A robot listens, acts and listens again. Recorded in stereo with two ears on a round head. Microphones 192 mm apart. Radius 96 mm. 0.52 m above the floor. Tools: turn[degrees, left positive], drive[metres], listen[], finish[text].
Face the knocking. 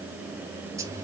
Action: listen[]
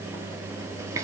Action: listen[]
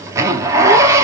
Action: finish[I can't make out knocking, only a zipper.]